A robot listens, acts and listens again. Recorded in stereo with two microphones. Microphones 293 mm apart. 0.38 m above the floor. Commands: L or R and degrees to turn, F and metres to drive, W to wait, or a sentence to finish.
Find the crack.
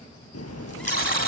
L60
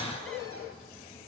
W
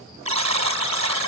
I heard a crack, but can't make it out now. It was about straight ahead or 60° left.